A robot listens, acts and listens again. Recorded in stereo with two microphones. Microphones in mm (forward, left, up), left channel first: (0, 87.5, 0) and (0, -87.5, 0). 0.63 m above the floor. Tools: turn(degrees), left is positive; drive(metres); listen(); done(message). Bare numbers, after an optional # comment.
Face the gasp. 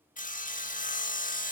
listen()
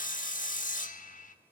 listen()
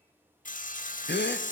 # The gasp: about 70° left or 110° left.
turn(70)
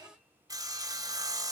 listen()
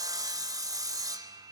done("I heard a gasp, but can't make it out now. It was about straight ahead or 40° left.")